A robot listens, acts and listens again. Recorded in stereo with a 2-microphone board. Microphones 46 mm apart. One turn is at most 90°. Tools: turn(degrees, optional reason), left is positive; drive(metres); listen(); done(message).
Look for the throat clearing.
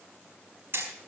listen()
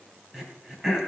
turn(degrees=-30)
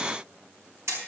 listen()
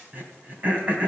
turn(degrees=-90, reason="So it is at 140° right.")
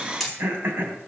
turn(degrees=-55, reason="The throat clearing is now 55° right.")
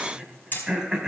turn(degrees=-15, reason="The throat clearing is now 15° right.")
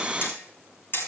listen()
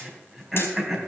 done("Facing the throat clearing, 2 to 4 m away.")